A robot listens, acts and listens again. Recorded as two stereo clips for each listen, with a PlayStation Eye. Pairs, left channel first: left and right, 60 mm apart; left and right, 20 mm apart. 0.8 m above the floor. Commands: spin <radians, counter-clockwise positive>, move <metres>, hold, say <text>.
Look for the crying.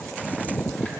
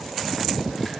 hold
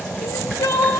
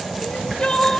spin 1.22
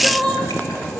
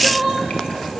say Found it: crying, straight ahead.